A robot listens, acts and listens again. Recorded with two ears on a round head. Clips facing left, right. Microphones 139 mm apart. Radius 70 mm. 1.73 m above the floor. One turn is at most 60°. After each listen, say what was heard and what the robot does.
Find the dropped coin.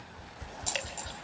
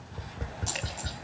Turn 30° left.
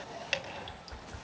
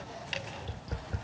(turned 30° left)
Keep listening.
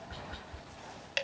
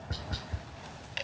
I heard a dropped coin, but can't make it out now. It was about 15° right or 135° left.